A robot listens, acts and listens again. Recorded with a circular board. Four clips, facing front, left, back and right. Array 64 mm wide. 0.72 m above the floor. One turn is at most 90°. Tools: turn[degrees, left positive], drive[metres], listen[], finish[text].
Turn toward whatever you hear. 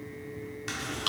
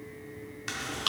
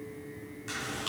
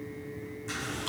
Thought: The chewing: 60° left.
Action: turn[60]
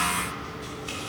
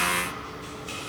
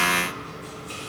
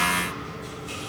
Action: listen[]
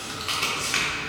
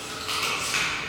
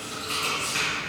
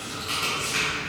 Thought: The chewing is now 15° left.
Action: turn[15]
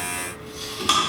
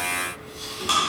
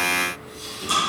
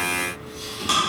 Action: finish[Facing the chewing, 1 to 2 m away.]